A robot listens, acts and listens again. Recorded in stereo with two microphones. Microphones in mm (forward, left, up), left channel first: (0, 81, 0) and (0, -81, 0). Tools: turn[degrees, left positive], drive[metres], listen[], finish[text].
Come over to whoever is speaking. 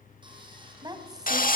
Thought: The woman speaking: about 25° right or 155° right.
Action: turn[-25]
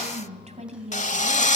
Thought: So it is at 130° right.
Action: turn[-130]
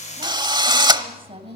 Thought: The woman speaking is now 40° right.
Action: turn[-40]
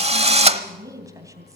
Thought: The woman speaking is now 25° right.
Action: turn[-25]
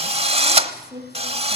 Thought: The woman speaking is now 25° right.
Action: turn[-25]
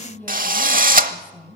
Thought: The woman speaking is now 15° left.
Action: turn[15]
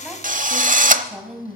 Action: drive[1.0]
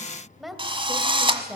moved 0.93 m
Action: drive[1.0]
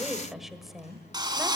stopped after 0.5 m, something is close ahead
Action: finish[Arrived at the woman speaking, straight ahead.]